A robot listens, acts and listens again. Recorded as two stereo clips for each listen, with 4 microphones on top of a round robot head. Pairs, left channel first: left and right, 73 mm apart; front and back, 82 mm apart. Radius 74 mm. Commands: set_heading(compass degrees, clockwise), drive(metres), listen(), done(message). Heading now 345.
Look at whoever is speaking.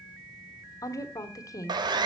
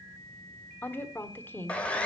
set_heading(285)
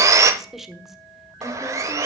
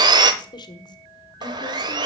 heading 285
done("Found it: a woman speaking, straight ahead.")